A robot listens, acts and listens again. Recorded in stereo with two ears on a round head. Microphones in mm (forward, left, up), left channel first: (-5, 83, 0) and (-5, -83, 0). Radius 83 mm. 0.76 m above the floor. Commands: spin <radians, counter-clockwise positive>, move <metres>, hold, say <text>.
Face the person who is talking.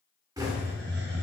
hold
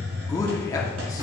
spin 0.35
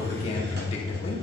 spin 2.44
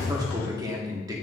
spin -0.35
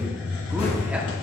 hold
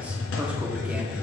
hold
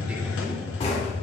say Facing where the man speaking came from. I can't hear it now.